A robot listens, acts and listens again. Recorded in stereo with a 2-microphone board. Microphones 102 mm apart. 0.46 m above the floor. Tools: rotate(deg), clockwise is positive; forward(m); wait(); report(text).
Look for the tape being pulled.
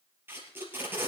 rotate(20)
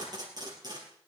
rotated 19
rotate(140)
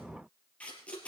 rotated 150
rotate(-10)
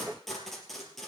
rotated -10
report("Found it: tape being pulled, straight ahead, 2 to 4 m away.")